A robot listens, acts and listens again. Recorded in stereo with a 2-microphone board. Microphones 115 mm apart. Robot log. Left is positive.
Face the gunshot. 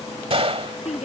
note: The gunshot: about 55° right or 125° right.
cmd yaw -55
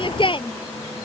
cmd idle
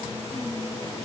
end: I heard a gunshot, but can't make it out now. It was about straight ahead or 70° right.